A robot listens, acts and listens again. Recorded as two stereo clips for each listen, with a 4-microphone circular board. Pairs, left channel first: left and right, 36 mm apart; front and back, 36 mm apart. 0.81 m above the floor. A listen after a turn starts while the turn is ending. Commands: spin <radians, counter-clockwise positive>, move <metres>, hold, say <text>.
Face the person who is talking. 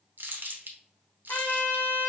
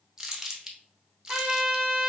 hold
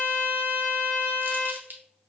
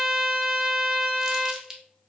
hold
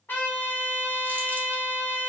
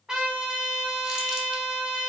say I can't make out anyone speaking, only crumpling and a trumpet.